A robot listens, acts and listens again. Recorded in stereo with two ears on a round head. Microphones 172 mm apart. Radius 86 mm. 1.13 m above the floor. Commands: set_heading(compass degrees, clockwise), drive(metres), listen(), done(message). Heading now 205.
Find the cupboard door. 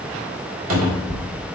set_heading(295)
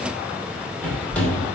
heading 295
set_heading(285)
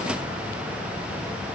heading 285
listen()
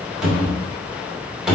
done("Found it: a cupboard door, straight ahead.")